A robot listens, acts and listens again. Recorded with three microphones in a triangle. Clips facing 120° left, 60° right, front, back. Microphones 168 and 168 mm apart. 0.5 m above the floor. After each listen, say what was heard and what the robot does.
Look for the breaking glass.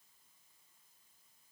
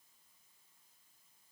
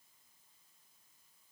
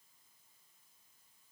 Keep listening.
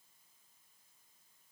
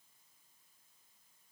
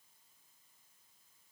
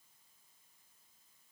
Keep listening.
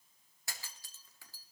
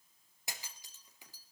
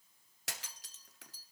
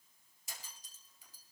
The breaking glass: 10° left. Turn 10° left.
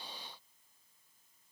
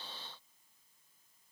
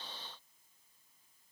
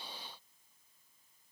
Facing where the breaking glass came from. I can't hear it now.